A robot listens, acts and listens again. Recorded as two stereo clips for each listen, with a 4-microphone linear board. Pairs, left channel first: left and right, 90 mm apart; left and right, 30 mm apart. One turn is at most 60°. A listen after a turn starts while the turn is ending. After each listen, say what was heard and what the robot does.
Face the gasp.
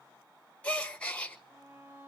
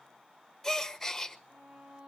Turn 30° left.
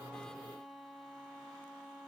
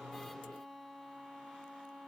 Keep listening.
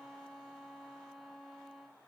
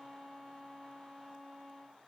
I heard a gasp, but can't make it out now. It was about 15° right or 135° left.